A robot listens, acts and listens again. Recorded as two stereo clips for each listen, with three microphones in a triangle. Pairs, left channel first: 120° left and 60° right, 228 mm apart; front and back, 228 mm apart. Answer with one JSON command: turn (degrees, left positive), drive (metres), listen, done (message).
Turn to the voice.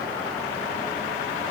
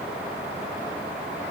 {"listen": true}
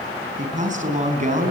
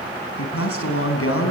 {"done": "Facing the man speaking, over 4 m away."}